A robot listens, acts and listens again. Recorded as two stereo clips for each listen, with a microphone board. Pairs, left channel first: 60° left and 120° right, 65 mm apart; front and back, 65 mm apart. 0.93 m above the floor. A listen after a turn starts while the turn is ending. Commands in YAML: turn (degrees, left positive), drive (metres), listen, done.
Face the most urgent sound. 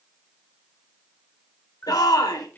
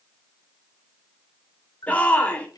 turn: 70
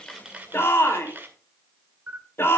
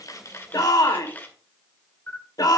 turn: 10
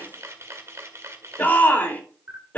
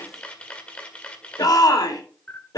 done: "Facing the shout, 2 to 4 m away."